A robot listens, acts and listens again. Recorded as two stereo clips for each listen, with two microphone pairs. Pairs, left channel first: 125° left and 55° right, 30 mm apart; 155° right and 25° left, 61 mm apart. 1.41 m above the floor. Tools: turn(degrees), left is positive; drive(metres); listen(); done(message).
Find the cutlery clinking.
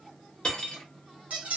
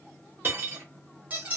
turn(degrees=75)
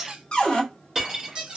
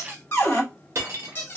done("Facing the cutlery clinking, 1 to 2 m away.")